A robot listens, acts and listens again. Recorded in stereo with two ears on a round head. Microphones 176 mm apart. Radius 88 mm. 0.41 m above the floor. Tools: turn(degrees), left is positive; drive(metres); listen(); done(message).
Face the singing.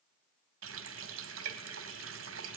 listen()
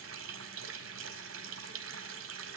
listen()
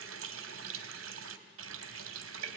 done("I can't make out singing to turn to.")